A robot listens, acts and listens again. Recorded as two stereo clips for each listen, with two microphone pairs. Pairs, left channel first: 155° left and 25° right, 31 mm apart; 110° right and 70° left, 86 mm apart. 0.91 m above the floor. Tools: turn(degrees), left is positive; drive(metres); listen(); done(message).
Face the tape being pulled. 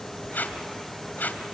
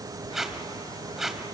turn(degrees=160)
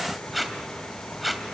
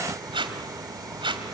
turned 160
turn(degrees=65)
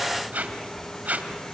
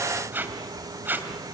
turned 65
done("Facing the tape being pulled, 2 to 4 m away.")